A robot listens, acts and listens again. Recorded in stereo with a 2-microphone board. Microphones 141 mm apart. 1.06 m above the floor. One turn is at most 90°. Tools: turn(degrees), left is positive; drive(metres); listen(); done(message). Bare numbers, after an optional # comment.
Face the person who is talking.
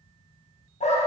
listen()
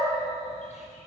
listen()
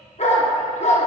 done("I can't make out anyone speaking to turn to.")